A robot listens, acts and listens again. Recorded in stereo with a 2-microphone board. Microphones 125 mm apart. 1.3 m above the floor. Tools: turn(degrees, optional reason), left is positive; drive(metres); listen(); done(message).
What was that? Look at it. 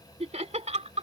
turn(degrees=-70, reason="The laughter: about 70° right or 110° right.")
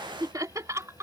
turn(degrees=-25, reason="So it is at 25° right.")
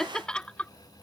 turn(degrees=10, reason="The laughter is now 10° left.")
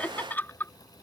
turn(degrees=20, reason="The laughter is now 20° left.")
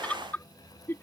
turn(degrees=20, reason="The laughter is now 20° left.")
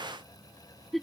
done("Facing the laughter.")